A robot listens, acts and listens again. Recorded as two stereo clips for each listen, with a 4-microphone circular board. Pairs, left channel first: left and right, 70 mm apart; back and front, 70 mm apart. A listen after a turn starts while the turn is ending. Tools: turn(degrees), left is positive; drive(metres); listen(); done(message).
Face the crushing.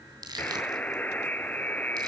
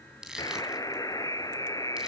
turn(degrees=-80)
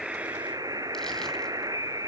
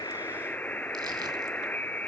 listen()
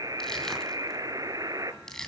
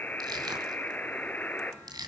done("Facing the crushing.")